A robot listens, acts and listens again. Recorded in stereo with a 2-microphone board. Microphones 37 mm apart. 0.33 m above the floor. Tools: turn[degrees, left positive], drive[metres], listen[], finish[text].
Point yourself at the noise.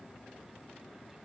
Action: listen[]
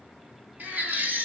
Thought: The baby crying: about 50° right or 130° right.
Action: turn[-50]
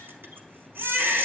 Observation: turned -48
Thought: So it is at 80° right.
Action: turn[-80]
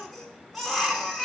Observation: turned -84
Action: finish[Facing the baby crying, 1 to 2 m away.]